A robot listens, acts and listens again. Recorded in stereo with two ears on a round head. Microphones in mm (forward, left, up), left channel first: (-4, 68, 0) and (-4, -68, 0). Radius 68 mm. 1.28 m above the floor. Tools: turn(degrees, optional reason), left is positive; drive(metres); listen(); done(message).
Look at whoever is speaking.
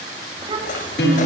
turn(degrees=-30, reason="The child speaking: about 30° right or 150° right.")
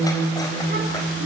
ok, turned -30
listen()
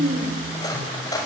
turn(degrees=-120, reason="So it is at 120° right.")
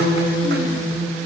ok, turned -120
listen()
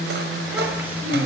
turn(degrees=-15, reason="The child speaking is now 15° right.")
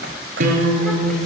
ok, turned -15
listen()
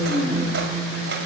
done("Facing the child speaking.")